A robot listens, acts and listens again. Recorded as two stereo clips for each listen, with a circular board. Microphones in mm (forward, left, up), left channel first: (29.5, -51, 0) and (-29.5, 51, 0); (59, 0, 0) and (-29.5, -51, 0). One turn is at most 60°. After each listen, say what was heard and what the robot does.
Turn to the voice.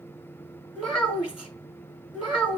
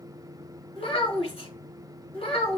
The child speaking: 40° left. Turn 40° left.
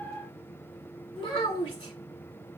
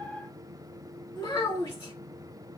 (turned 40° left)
The child speaking is now 15° right. Turn 15° right.
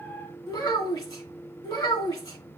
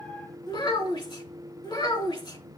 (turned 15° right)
Facing the child speaking.